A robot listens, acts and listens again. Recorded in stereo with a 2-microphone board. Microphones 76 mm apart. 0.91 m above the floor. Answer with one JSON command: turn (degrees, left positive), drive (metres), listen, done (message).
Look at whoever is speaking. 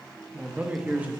{"turn": -20}
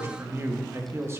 {"turn": -145}
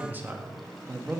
{"turn": -25}
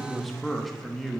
{"done": "Found it: a man speaking, straight ahead, 1 to 2 m away."}